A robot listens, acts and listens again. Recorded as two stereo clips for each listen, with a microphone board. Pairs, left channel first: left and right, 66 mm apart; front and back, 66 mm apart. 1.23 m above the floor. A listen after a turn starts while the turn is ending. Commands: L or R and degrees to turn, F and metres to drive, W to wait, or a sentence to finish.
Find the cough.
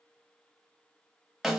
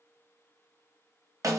W
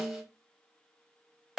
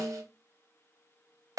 W
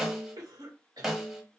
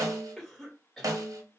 R85
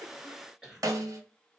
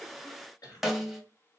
R10
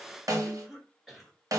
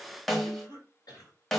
Found it: a cough, straight ahead.